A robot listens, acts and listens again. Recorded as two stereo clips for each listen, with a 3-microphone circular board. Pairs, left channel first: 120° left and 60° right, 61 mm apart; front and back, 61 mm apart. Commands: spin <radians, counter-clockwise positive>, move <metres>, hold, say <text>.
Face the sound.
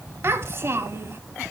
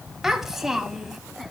spin -1.66
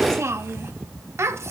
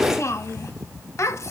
spin -0.52
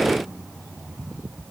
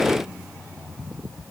hold
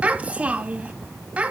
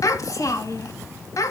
say Facing the child speaking, 1 to 2 m away.